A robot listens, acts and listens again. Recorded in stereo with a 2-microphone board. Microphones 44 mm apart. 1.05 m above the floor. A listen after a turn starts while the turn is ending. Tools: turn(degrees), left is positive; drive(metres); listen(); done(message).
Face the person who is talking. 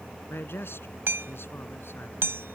turn(degrees=70)
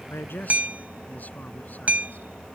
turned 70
listen()
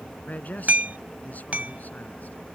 turn(degrees=40)
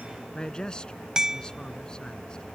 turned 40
turn(degrees=20)
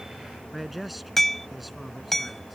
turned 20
done("Found it: a man speaking, straight ahead.")